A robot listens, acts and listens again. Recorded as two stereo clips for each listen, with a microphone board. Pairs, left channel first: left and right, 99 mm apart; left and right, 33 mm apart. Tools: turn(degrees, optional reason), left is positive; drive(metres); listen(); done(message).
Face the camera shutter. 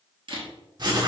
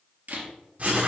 turn(degrees=-60, reason="The camera shutter: about 60° right or 120° right.")
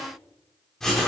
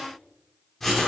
listen()
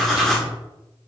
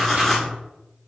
listen()
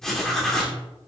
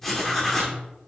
done("I heard a camera shutter, but can't make it out now. It was about straight ahead or 60° right.")